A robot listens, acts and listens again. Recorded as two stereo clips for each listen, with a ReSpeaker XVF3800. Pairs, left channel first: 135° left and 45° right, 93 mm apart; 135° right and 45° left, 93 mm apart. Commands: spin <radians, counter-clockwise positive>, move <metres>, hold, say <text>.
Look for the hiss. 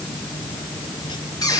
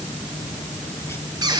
hold
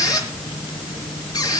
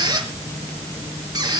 hold
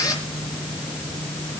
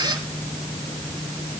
say I can't make out a hiss to turn to.